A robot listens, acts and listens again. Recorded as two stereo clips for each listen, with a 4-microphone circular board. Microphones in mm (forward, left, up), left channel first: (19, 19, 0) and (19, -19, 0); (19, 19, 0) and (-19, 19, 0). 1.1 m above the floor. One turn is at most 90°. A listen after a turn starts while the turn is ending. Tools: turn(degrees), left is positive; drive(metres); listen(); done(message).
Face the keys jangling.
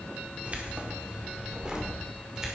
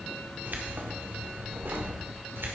turn(degrees=-90)
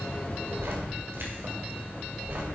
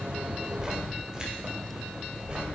turn(degrees=-90)
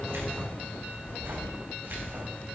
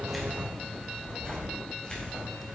turn(degrees=-60)
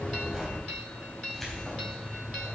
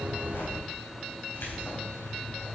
done("Found it: keys jangling, straight ahead.")